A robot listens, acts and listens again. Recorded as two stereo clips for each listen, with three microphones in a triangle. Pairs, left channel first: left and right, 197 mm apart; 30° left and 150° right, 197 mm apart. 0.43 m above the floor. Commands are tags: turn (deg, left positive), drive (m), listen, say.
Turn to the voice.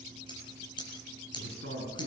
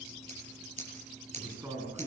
<turn deg="-75"/>
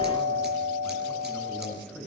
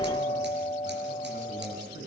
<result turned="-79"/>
<say>Facing the man speaking, over 4 m away.</say>